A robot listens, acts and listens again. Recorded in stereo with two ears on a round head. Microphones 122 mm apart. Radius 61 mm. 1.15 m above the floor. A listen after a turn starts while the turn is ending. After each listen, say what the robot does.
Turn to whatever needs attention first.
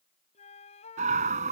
Turn 55° right.
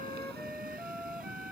Turn 65° right.
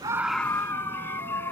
Turn 15° left.
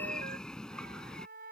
Found it: a scream, straight ahead.